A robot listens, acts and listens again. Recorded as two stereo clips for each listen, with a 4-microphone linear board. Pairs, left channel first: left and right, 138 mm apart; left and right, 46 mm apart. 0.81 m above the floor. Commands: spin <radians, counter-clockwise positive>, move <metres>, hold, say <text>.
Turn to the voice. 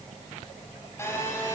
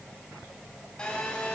hold
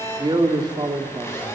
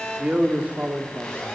spin -0.52
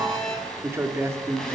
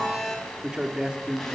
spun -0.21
spin -0.35
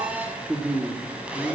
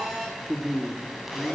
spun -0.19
spin -0.17
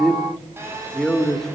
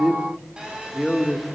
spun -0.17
say Facing the man speaking, 2 to 4 m away.